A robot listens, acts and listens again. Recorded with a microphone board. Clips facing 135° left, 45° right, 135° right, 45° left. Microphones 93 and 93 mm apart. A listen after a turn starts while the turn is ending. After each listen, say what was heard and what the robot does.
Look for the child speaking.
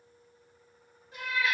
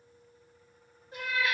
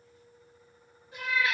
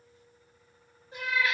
Keep listening.
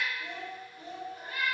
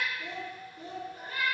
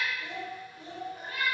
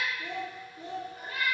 The child speaking: 25° right. Turn 25° right.
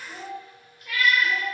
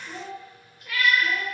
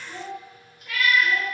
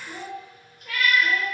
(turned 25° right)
Facing the child speaking, 2 to 4 m away.